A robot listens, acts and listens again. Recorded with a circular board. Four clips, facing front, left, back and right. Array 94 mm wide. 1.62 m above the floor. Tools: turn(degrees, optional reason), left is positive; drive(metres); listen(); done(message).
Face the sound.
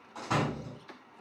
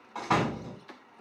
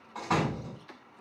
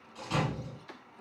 turn(degrees=105, reason="The door slam: 105° left.")
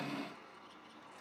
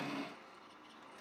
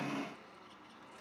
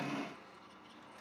done("Facing where the door slam came from. I can't hear it now.")